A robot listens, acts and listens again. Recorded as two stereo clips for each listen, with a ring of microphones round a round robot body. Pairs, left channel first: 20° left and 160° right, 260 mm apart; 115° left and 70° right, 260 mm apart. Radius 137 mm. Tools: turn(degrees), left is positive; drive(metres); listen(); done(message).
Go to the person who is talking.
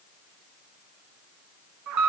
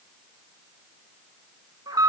listen()
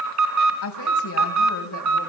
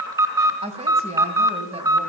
drive(metres=1.0)
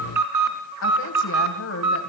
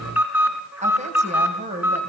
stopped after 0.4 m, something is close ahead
done("Something is in my way. I am facing the woman speaking but have not reached it.")